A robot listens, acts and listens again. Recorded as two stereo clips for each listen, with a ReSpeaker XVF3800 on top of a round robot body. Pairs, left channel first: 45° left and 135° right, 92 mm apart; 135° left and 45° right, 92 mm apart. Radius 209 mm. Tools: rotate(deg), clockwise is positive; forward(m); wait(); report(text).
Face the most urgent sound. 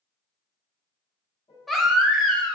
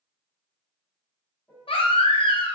rotate(-135)
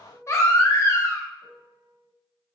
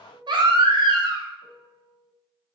rotate(10)
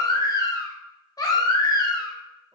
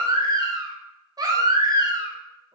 report("Facing the baby crying, under 1 m away.")